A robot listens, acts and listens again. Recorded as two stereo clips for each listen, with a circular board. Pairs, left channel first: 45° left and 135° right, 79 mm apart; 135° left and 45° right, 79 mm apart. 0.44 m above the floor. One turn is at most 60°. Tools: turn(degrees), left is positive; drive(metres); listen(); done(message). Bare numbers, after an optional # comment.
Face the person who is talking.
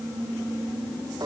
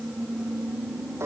listen()
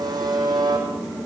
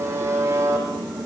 listen()
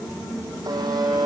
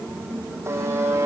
done("I can't make out anyone speaking, only a buzzer.")